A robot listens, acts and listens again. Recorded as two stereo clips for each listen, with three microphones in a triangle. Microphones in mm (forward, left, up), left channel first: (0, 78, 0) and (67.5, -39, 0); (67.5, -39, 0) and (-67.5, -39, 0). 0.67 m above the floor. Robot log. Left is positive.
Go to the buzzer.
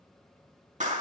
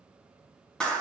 cmd idle
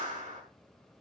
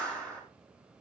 cmd idle
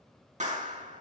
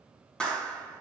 end: I can't make out a buzzer to turn to.